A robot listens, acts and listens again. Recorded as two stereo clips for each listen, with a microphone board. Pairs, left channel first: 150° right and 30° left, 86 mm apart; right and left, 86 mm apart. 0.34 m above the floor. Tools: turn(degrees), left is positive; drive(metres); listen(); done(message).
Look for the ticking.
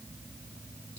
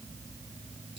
listen()
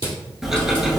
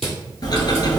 turn(degrees=-55)
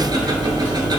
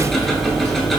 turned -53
done("Facing the ticking.")